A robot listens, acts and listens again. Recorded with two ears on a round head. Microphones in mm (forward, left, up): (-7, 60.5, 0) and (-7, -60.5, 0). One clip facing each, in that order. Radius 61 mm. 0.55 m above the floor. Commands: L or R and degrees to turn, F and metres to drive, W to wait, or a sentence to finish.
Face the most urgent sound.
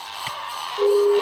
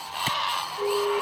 L45
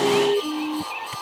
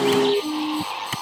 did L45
Facing the siren.